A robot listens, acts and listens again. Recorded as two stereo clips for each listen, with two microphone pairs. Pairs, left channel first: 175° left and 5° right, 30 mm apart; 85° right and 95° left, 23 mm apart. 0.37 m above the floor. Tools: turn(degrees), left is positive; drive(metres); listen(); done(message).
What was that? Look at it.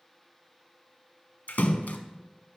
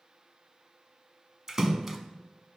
turn(degrees=165)
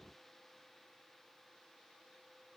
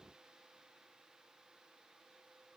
done("Facing where the splash came from. I can't hear it now.")